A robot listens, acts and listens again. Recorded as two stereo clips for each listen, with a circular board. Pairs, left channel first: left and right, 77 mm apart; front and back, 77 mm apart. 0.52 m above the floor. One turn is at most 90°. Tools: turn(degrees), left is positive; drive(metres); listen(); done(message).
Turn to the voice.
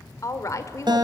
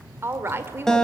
turn(degrees=90)
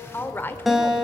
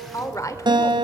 turn(degrees=35)
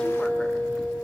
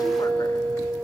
listen()
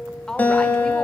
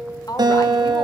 turn(degrees=10)
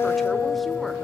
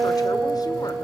listen()
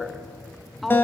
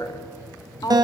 done("Found it: a woman speaking, straight ahead.")